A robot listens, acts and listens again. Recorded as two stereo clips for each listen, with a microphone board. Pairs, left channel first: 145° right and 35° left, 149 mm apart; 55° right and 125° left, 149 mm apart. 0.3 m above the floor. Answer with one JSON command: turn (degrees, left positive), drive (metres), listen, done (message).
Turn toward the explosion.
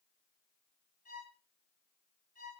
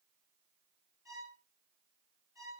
{"listen": true}
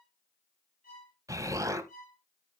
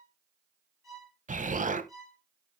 {"turn": 100}
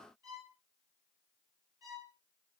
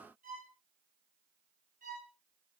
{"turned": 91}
{"turn": 10}
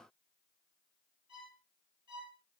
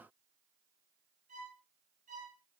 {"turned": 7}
{"done": "Facing where the explosion came from. I can't hear it now."}